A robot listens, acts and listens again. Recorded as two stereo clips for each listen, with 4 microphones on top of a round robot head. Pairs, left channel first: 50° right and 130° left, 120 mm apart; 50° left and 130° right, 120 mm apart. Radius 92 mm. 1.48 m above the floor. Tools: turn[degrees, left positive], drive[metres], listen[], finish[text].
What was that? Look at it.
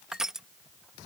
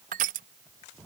Thought: The crushing: 145° right.
Action: turn[-145]
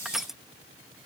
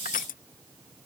Thought: The crushing is now 40° left.
Action: turn[40]
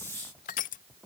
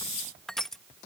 Thought: The crushing is now 35° right.
Action: turn[-35]
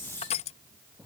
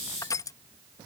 Thought: The crushing is now 15° right.
Action: turn[-15]
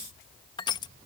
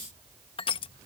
Action: finish[Found it: crushing, straight ahead.]